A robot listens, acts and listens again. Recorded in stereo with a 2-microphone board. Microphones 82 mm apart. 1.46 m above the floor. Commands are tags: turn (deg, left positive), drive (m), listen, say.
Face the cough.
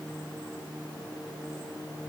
<listen/>
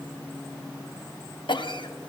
<turn deg="75"/>
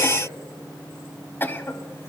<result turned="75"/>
<turn deg="25"/>
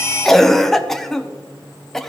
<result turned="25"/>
<say>Facing the cough.</say>